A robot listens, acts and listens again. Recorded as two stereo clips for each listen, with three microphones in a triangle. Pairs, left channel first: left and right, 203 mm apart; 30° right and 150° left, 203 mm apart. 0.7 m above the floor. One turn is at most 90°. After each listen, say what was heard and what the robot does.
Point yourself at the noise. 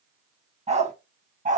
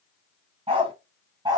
The dog barking: 140° right. Turn 90° right.
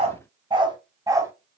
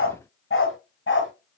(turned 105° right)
The dog barking is now 15° right. Turn 15° right.
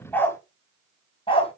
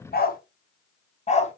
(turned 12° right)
The dog barking is now 25° left. Turn 25° left.
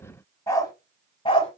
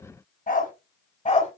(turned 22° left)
The dog barking is now 25° left. Turn 25° left.
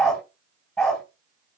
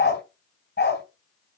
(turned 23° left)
Found it: a dog barking, straight ahead.